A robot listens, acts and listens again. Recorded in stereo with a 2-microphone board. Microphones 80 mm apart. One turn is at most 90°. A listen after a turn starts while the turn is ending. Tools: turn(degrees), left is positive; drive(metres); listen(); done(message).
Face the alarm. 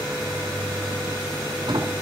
listen()
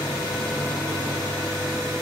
listen()
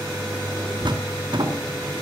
done("I can't make out an alarm, only a sliding door.")